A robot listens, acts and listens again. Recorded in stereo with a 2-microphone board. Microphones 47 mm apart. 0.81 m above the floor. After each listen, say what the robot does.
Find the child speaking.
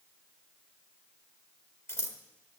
Keep listening.
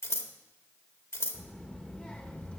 Turn 25° left.
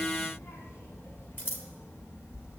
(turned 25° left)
Turn 115° left.
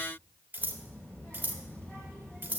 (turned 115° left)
Turn 25° left.
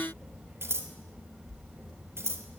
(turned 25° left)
Found it: a child speaking, straight ahead, 2 to 4 m away.